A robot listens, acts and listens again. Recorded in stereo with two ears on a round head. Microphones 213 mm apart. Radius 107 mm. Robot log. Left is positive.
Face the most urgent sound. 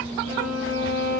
cmd idle
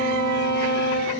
cmd idle
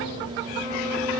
end: I can't make out anything urgent to turn to.